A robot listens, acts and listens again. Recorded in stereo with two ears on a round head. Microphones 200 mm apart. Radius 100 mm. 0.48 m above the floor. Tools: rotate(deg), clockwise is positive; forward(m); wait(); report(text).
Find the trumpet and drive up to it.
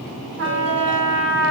rotate(70)
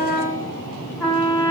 rotate(10)
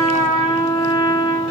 forward(1.0)
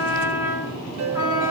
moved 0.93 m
rotate(10)
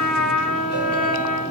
forward(1.0)
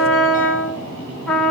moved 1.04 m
forward(1.0)
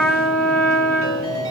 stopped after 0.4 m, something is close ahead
rotate(-10)
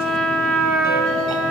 report("Arrived at the trumpet, straight ahead.")